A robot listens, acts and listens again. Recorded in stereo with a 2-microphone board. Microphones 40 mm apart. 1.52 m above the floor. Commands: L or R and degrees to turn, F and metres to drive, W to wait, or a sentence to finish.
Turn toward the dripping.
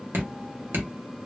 R90
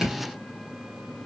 R15
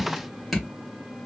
Facing the dripping, 1 to 2 m away.